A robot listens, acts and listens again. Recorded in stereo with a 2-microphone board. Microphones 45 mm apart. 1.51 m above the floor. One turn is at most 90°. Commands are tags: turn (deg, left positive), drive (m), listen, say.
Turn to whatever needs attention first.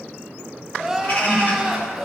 <turn deg="-30"/>
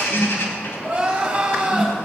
<turn deg="-90"/>
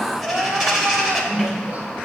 <turn deg="-50"/>
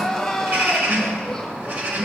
<say>Facing the crying.</say>